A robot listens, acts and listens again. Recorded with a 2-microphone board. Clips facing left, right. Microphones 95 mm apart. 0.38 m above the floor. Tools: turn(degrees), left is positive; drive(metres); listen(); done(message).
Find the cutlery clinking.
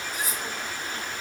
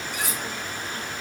turn(degrees=-75)
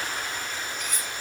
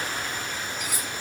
turn(degrees=-10)
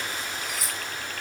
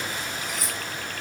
done("Found it: cutlery clinking, straight ahead.")